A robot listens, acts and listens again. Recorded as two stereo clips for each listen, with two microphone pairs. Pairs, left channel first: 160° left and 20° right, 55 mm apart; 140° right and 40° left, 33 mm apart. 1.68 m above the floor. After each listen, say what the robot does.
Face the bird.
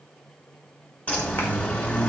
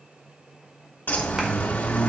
Turn 135° right.
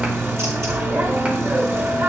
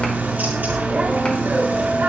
Turn 20° left.
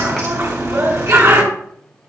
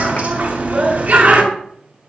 Found it: a bird, straight ahead, 2 to 4 m away.